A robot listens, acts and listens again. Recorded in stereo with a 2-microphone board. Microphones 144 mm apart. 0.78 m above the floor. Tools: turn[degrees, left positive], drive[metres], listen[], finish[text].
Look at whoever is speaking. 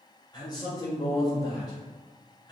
Thought: The man speaking: about 30° left or 150° left.
Action: turn[30]
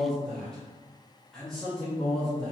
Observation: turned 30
Action: finish[Facing the man speaking.]